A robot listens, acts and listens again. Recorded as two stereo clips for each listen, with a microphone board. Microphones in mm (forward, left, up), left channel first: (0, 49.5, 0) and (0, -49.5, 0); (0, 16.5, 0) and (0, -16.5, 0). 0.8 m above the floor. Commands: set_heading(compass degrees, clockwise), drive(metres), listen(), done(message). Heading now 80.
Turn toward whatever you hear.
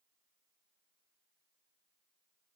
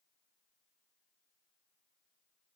listen()
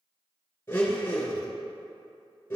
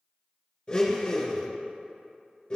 set_heading(55)
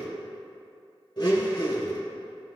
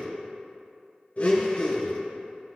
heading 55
set_heading(285)
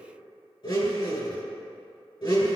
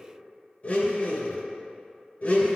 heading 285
set_heading(230)
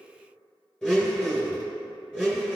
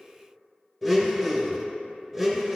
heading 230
done("Facing the blender.")